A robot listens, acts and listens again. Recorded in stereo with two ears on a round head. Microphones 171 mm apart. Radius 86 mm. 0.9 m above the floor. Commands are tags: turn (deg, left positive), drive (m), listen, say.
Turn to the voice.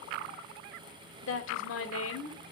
<turn deg="90"/>
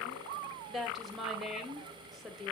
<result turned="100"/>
<say>Facing the woman speaking, 2 to 4 m away.</say>